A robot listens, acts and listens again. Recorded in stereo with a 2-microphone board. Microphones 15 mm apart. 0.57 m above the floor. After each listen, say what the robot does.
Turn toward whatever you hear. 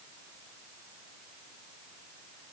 Keep listening.
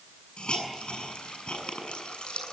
Turn 70° left.
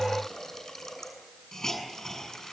Turn 35° left.
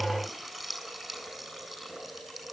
Found it: a hiss, straight ahead.